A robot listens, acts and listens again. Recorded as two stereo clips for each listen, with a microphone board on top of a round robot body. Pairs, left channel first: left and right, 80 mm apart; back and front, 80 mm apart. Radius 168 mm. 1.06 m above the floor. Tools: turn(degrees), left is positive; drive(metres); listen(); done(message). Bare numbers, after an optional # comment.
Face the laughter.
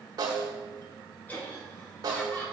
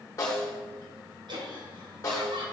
# The laughter: 15° left.
turn(15)
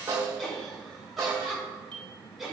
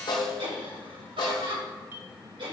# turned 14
done("Facing the laughter, over 4 m away.")